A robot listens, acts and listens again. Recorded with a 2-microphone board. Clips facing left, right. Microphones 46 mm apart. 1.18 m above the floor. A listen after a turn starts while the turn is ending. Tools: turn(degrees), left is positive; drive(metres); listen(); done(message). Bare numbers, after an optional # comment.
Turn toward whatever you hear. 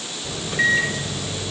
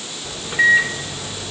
turn(-30)
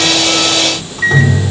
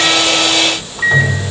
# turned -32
# So it is at 20° left.
turn(20)
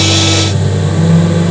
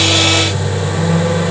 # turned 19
done("Found it: a microwave, straight ahead, 2 to 4 m away.")